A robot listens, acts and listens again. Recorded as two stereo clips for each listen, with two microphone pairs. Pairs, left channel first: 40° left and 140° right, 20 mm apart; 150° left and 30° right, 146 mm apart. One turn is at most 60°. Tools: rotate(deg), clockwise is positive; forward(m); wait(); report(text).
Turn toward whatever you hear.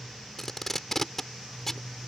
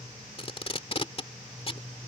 rotate(-60)
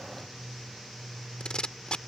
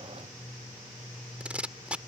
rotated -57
rotate(-50)
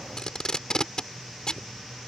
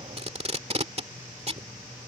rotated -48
report("Found it: tape being pulled, straight ahead.")